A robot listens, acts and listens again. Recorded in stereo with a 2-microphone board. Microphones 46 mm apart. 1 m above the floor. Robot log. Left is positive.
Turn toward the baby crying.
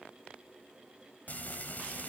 cmd idle
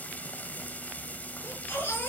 note: The baby crying: about 55° left or 125° left.
cmd yaw +55
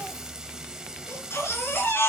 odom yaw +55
note: So it is at 70° left.
cmd yaw +70
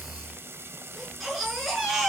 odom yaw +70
end: Found it: a baby crying, straight ahead.